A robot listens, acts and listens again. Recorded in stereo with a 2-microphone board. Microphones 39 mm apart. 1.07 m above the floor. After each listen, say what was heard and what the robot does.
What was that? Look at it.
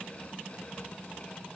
Keep listening.
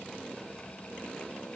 Keep listening.
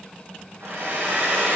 The hair dryer: about 65° right or 115° right. Turn 65° right.
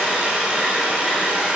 So it is at 25° right. Turn 25° right.
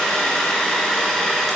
The hair dryer is now 10° left. Turn 10° left.
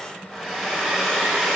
Facing the hair dryer.